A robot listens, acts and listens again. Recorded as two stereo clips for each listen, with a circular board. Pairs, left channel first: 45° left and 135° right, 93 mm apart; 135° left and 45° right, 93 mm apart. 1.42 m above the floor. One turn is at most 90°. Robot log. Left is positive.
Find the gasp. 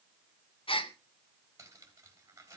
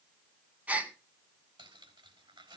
note: The gasp: 30° left.
cmd yaw +30
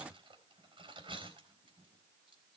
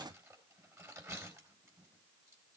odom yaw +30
end: Facing where the gasp came from. I can't hear it now.